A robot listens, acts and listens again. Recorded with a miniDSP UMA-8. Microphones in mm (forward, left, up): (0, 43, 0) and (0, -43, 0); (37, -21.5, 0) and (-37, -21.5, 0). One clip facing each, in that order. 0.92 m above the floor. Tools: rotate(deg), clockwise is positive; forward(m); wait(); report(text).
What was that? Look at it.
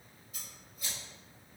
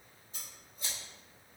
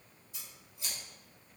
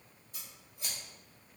rotate(145)
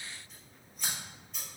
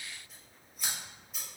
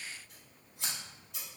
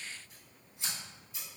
report("Facing the scissors.")